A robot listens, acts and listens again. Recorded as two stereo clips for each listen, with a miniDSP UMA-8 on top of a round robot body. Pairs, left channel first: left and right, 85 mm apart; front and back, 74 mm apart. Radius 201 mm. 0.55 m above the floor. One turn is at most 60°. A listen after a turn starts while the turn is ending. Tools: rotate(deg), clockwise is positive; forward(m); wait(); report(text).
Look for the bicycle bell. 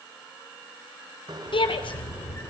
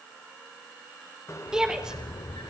rotate(50)
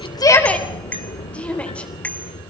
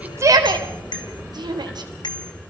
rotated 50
rotate(-15)
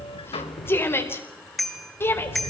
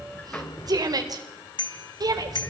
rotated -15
report("Facing the bicycle bell, 2 to 4 m away.")